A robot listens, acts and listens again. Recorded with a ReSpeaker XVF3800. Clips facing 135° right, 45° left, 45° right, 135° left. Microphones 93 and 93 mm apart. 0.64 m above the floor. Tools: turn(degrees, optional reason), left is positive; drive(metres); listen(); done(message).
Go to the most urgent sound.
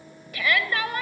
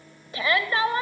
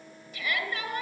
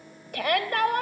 turn(degrees=105, reason="The shout: 105° left.")
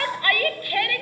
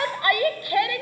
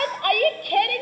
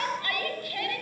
turn(degrees=-25, reason="The shout is now 25° right.")
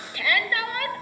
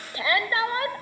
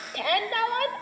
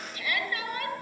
turn(degrees=-15, reason="The shout is now 15° right.")
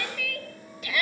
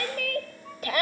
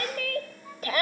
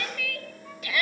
drive(metres=1.0)
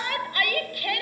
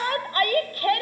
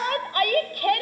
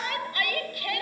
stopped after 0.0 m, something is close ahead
done("Something is in my way. I am facing the shout but have not reached it.")